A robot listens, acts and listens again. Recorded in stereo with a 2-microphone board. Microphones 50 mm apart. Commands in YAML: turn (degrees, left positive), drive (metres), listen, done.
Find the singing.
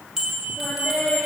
turn: 25
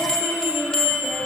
turn: 135
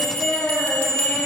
done: "Facing the singing, over 4 m away."